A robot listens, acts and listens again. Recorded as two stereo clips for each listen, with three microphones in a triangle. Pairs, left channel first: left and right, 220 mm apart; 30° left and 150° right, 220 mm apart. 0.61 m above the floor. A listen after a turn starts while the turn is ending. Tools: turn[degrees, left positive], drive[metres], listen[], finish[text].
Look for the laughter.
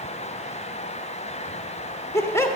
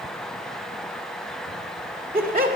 Thought: The laughter: 165° left.
Action: turn[165]
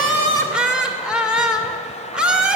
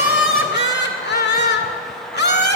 Action: finish[Found it: laughter, straight ahead.]